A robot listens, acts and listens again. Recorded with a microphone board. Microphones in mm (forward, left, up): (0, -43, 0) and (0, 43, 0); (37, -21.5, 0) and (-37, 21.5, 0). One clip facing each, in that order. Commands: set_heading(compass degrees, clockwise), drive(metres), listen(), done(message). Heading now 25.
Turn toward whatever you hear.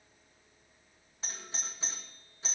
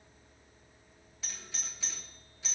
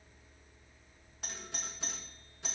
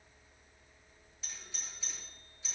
set_heading(65)
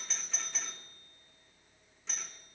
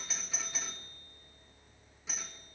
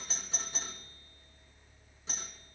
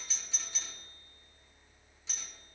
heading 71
set_heading(61)
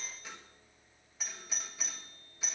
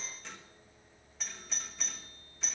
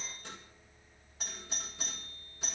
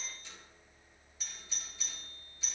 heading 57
done("Facing the doorbell.")